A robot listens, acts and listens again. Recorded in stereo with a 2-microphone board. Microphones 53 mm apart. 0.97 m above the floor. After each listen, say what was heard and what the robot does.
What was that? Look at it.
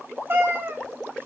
The cat meowing: about 40° right or 140° right. Turn 40° right.
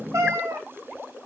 So it is at 95° right. Turn 95° right.
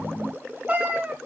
The cat meowing is now 30° right. Turn 30° right.
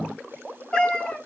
The cat meowing is now 20° left. Turn 20° left.
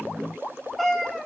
Facing the cat meowing.